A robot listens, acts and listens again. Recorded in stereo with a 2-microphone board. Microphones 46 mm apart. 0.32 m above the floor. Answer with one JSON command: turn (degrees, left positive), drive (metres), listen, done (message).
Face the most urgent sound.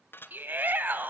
{"turn": -45}
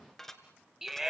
{"turn": -10}
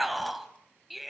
{"done": "Facing the shout, 1 to 2 m away."}